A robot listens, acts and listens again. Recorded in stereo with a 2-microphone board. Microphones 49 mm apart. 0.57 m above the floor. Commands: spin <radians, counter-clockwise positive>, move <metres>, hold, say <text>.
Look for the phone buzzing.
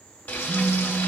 spin -1.22
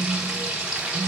spin -0.44
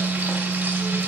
say Facing the phone buzzing.